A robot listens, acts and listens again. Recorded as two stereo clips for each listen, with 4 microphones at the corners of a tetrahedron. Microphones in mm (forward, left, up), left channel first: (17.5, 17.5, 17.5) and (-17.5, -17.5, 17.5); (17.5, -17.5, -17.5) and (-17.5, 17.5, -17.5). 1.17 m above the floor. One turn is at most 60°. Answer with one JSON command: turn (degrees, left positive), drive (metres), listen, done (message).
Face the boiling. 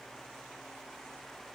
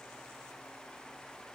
{"listen": true}
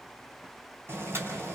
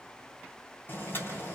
{"turn": -60}
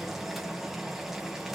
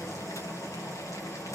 {"turn": -50}
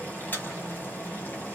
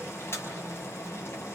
{"turn": -10}
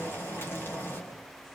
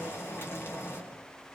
{"done": "Found it: boiling, straight ahead, over 4 m away."}